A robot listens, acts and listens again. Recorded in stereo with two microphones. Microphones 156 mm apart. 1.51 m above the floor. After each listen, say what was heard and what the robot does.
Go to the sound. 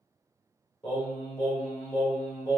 The singing: about 30° left or 150° left. Turn 30° left.
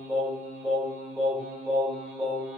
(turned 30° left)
Drive 1.0 m forward.
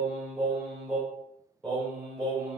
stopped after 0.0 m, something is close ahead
Something is in my way. I am facing the singing but have not reached it.